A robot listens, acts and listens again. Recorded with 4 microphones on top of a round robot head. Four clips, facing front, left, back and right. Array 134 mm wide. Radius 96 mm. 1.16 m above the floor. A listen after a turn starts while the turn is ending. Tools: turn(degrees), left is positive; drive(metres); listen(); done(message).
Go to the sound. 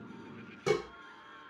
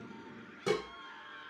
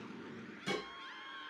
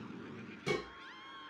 turn(degrees=40)
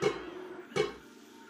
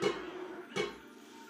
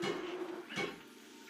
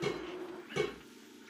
drive(metres=1.0)
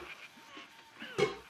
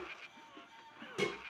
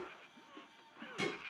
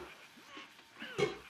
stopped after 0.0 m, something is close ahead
done("Blocked. The dishes clattering is further on, straight ahead.")